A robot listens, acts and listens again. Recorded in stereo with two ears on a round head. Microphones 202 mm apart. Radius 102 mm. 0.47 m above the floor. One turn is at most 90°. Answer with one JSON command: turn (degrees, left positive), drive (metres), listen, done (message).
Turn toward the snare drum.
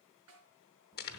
{"turn": -75}
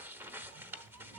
{"listen": true}
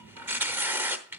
{"listen": true}
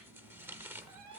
{"done": "I heard a snare drum, but can't make it out now. It was about straight ahead or 30° right."}